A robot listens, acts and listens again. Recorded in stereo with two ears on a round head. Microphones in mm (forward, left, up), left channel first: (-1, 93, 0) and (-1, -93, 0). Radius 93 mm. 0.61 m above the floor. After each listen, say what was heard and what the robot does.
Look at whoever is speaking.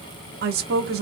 The woman speaking: about 50° right or 130° right. Turn 50° right.
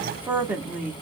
So it is at 10° right. Turn 10° right.
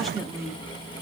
Facing the woman speaking.